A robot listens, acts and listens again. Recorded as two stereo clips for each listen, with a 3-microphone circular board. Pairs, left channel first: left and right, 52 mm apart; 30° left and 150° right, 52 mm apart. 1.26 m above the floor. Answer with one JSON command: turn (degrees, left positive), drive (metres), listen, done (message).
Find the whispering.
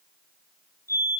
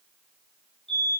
{"listen": true}
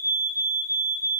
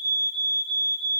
{"listen": true}
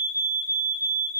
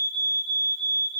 {"done": "I can't make out whispering to turn to."}